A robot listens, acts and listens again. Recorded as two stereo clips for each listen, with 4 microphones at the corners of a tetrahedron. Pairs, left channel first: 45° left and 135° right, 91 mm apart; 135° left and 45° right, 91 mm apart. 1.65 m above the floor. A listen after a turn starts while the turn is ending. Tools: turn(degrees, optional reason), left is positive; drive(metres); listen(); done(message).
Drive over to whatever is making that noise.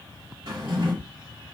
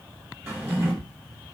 turn(degrees=-105, reason="The drawer: 105° right.")
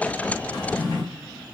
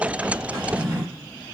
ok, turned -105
turn(degrees=15, reason="The drawer is now 15° left.")
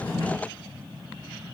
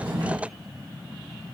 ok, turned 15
drive(metres=1.0)
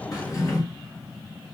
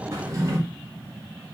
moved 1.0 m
drive(metres=1.0)
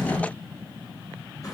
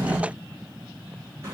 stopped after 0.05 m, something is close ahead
done("Arrived at the drawer, straight ahead.")